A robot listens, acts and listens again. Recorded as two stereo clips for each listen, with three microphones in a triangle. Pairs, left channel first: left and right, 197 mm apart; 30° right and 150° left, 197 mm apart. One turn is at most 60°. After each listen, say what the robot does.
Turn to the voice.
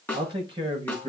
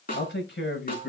Turn 25° right.
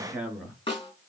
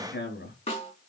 Found it: a man speaking, straight ahead, over 4 m away.